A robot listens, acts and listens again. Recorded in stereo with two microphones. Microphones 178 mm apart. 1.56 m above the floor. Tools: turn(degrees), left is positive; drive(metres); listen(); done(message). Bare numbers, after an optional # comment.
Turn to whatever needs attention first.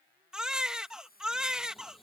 turn(-30)
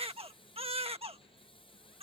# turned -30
# So it is at 145° right.
turn(-145)
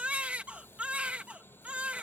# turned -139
# The baby crying is now 10° right.
turn(-10)
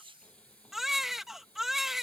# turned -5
done("Facing the baby crying.")